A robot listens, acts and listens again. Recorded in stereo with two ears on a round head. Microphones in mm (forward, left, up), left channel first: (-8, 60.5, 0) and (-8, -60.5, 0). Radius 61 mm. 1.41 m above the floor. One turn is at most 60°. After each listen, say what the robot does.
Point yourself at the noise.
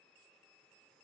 Keep listening.
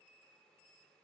Keep listening.
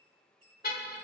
Turn 60° left.
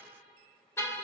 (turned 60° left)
Turn 20° left.
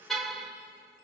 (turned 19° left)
Facing the car horn, 2 to 4 m away.